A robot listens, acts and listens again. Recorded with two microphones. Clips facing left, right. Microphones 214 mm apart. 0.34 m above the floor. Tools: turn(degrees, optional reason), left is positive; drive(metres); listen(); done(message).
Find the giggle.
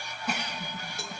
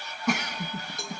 turn(degrees=-75, reason="The giggle: about 75° right or 105° right.")
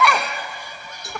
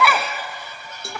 done("Found it: a giggle, straight ahead, under 1 m away.")